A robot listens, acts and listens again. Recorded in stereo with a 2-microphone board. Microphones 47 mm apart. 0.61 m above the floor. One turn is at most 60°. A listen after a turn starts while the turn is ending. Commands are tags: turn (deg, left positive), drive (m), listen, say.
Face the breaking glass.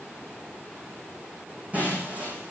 <turn deg="-35"/>
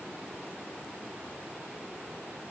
<listen/>
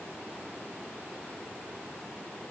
<say>I heard breaking glass, but can't make it out now. It was about straight ahead or 110° right.</say>